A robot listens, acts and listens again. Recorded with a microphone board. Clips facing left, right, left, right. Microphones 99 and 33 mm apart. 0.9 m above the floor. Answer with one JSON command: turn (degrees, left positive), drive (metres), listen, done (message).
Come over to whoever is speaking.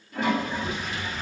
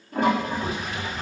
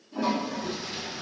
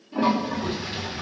{"turn": -65}
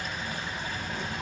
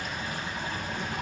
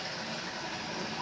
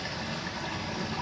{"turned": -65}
{"drive": 1.0}
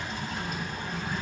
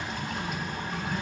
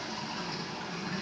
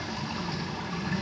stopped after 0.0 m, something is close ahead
{"done": "Something is in my way. I am facing the child speaking but have not reached it."}